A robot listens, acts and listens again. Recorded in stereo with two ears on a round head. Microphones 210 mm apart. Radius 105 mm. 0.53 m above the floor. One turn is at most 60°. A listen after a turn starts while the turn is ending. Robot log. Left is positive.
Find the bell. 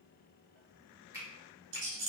cmd idle
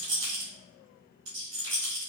cmd idle
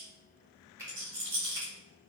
end: I can't make out a bell to turn to.